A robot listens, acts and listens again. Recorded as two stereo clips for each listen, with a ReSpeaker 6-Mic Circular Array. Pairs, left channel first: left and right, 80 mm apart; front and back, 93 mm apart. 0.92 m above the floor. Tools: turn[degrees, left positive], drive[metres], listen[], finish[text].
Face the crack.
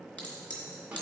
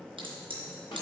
Thought: The crack: 160° left.
Action: turn[160]
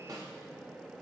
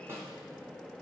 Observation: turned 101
Thought: Nothing new. It was at 60° left.
Action: turn[60]
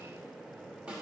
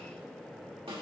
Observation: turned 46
Thought: Nothing new. It was at 15° left.
Action: turn[15]
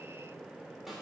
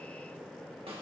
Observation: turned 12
Action: finish[Facing where the crack came from. I can't hear it now.]